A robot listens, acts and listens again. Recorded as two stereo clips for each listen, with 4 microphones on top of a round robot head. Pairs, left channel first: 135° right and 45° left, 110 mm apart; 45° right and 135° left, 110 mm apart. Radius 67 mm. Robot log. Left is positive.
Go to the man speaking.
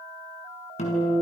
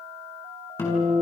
cmd idle
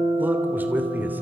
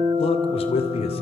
note: The man speaking: 25° right.
cmd yaw -25
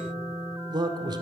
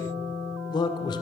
cmd fwd 1.0
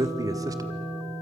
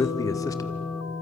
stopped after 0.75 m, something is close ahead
end: I am next to the man speaking.